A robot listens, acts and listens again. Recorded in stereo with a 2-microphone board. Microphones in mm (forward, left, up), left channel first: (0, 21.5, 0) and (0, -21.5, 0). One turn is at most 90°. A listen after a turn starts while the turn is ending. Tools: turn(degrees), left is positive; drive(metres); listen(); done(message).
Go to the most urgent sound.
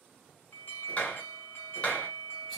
turn(degrees=65)
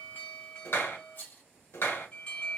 turn(degrees=35)
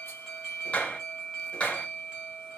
turn(degrees=-15)
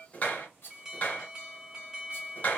drive(metres=1.0)
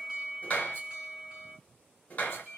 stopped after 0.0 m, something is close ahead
turn(degrees=-10)
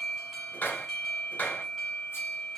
done("Something is in my way. I am facing the alarm but have not reached it.")